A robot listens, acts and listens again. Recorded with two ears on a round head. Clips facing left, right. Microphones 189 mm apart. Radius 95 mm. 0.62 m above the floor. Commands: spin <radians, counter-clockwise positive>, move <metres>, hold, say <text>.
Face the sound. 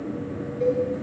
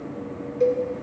spin -1.05
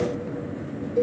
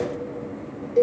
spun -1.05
spin -0.79
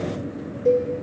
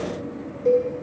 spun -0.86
say Found it: a cowbell, straight ahead, 2 to 4 m away.